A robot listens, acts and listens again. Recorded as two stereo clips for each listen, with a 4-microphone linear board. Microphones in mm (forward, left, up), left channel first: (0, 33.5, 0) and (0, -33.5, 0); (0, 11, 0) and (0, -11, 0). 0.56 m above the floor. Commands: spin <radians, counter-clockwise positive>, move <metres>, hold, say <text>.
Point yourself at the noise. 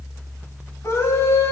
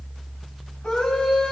spin 0.79
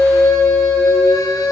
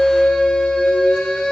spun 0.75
spin 1.57
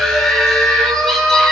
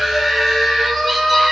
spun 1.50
say Facing the scream, 2 to 4 m away.